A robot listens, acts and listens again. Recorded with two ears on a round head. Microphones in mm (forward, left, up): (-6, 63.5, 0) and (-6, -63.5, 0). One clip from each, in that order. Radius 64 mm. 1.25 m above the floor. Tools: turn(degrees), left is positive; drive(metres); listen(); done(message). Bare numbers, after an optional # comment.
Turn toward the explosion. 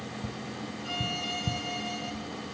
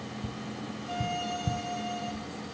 listen()
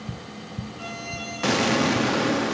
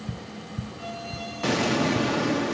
# The explosion: about 25° left or 155° left.
turn(25)
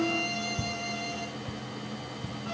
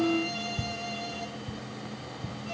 listen()
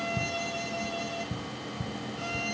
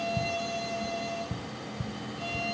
done("I heard an explosion, but can't make it out now. It was about straight ahead or 130° left.")